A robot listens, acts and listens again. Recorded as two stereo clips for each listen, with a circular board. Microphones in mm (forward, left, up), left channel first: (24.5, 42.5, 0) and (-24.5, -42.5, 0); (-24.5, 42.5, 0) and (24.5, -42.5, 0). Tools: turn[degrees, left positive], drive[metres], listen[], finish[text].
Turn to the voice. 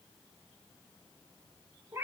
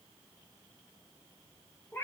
Action: listen[]
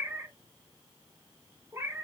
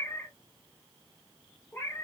Action: listen[]
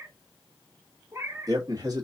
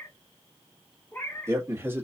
Thought: The man speaking: 115° right.
Action: turn[-115]
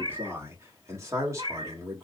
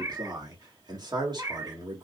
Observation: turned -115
Thought: The man speaking is now 75° right.
Action: turn[-75]
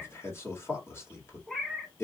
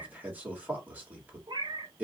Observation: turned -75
Action: finish[Found it: a man speaking, straight ahead.]